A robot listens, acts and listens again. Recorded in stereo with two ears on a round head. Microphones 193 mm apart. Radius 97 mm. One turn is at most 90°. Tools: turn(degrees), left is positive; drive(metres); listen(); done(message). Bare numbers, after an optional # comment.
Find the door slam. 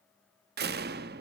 # The door slam: about 50° right or 130° right.
turn(-50)
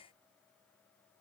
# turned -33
listen()
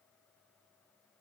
done("I heard a door slam, but can't make it out now. It was about 15° right or 100° right.")